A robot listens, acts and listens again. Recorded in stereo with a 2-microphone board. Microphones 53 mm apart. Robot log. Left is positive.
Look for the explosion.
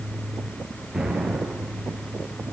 cmd yaw -30
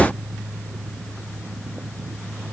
cmd idle
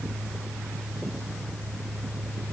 end: I heard an explosion, but can't make it out now. It was about 25° left or 145° right.